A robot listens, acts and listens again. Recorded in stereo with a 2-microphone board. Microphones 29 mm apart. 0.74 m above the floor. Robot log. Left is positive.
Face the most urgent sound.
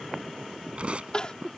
note: The crying: about 30° left or 150° left.
cmd yaw +30
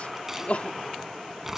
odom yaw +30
note: So it is at 115° left.
cmd yaw +115
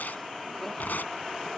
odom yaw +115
cmd idle
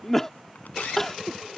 note: The crying is now 10° left.
cmd yaw +10
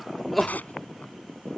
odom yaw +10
end: Facing the crying.